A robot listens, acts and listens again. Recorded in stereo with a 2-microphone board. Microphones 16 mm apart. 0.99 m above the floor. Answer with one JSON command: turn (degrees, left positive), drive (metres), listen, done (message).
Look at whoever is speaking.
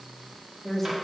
{"turn": 25}
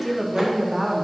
{"done": "Facing the woman speaking."}